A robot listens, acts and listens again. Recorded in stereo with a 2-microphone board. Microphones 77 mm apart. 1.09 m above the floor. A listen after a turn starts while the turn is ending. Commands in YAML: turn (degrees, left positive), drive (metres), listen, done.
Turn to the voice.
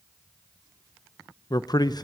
turn: 60
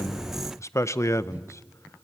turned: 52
turn: 45
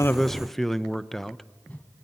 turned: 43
done: "Facing the man speaking, under 1 m away."